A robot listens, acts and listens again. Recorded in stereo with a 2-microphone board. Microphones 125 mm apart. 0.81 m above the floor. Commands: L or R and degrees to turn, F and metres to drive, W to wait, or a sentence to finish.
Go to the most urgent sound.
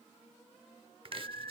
L30
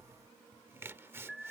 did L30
F1.0
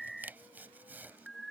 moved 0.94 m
F1.0
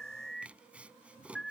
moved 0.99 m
F1.0
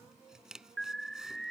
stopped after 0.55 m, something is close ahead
I am next to the alarm.